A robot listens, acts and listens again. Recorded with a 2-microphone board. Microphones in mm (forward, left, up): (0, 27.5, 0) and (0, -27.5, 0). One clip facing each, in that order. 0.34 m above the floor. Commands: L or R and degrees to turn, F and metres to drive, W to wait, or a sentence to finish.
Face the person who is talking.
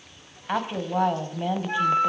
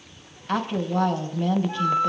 L30
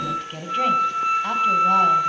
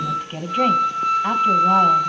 R15
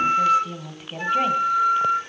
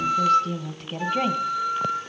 Found it: a woman speaking, straight ahead, 2 to 4 m away.